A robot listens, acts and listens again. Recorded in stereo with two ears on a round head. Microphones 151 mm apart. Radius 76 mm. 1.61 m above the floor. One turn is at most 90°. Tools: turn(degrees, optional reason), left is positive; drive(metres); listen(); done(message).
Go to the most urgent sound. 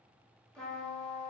listen()
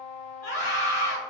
turn(degrees=45, reason="The scream: about 45° left or 135° left.")
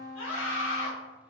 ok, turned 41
turn(degrees=90, reason="So it is at 90° left.")
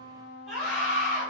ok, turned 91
drive(metres=1.0)
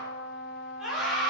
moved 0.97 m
drive(metres=1.0)
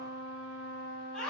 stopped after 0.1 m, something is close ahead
done("I am next to the scream.")